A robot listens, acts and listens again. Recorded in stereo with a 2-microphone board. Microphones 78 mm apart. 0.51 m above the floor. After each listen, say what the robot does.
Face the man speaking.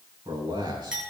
Turn 70° right.
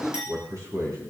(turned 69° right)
Turn 45° right.
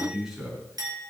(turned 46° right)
Facing the man speaking.